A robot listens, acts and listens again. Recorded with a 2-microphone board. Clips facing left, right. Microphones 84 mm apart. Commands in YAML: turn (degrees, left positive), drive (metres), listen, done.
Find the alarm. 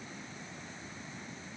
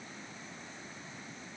listen: true
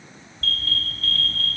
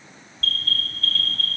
turn: 30
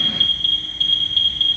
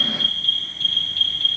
turn: -25
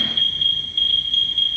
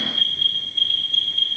done: "Found it: an alarm, straight ahead."